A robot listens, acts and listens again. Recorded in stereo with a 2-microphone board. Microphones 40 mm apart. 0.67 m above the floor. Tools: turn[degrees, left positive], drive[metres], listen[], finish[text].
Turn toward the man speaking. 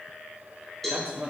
Thought: The man speaking: about 30° right or 150° right.
Action: turn[-30]
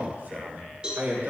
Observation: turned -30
Thought: So it is at 130° right.
Action: turn[-130]
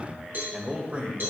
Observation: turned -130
Thought: The man speaking is now 35° right.
Action: turn[-35]
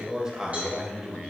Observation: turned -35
Thought: The man speaking is now 25° right.
Action: turn[-25]
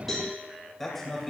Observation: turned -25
Action: finish[Found it: a man speaking, straight ahead, 2 to 4 m away.]